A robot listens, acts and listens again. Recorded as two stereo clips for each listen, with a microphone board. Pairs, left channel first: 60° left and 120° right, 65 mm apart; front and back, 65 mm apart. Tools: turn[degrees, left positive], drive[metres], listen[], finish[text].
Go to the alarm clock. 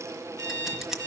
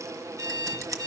Thought: The alarm clock: 150° right.
Action: turn[-150]
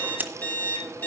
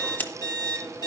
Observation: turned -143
Action: drive[1.0]
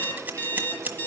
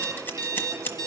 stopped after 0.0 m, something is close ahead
Action: finish[Something is in my way. I am facing the alarm clock but have not reached it.]